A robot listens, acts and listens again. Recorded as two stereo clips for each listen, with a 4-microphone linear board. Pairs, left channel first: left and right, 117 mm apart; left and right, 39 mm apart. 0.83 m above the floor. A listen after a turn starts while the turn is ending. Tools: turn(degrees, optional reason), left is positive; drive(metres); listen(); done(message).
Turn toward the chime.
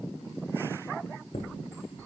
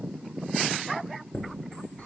turn(degrees=55, reason="The chime: about 55° left or 125° left.")
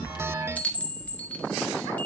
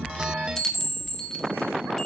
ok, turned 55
turn(degrees=10, reason="So it is at 10° left.")
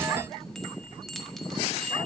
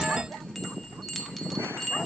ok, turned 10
done("Found it: a chime, straight ahead, 1 to 2 m away.")